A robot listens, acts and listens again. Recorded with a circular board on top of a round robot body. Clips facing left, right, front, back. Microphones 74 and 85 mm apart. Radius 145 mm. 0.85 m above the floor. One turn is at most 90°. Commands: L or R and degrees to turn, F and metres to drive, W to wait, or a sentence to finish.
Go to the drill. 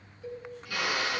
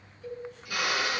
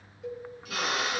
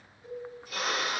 R15
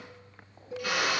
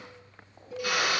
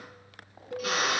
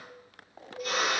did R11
F1.0
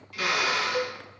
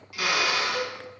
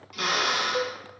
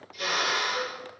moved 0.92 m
R10
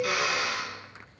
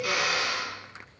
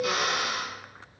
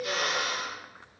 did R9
F1.0
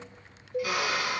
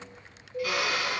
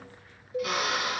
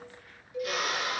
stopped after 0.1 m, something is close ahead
Blocked. The drill is further on, straight ahead.